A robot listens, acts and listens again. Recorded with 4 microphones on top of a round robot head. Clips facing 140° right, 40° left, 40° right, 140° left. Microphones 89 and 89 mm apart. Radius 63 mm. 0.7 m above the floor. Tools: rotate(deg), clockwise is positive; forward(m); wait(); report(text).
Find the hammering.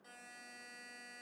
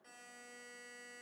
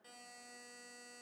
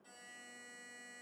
wait()
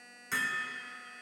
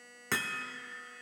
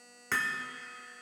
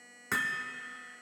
rotate(-60)
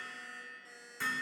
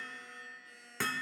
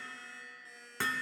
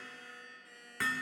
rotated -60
rotate(-25)
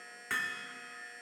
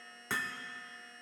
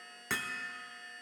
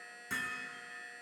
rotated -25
rotate(25)
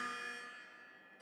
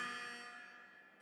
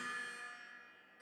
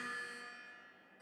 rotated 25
rotate(10)
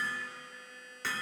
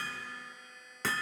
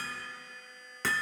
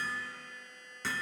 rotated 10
report("Found it: hammering, straight ahead.")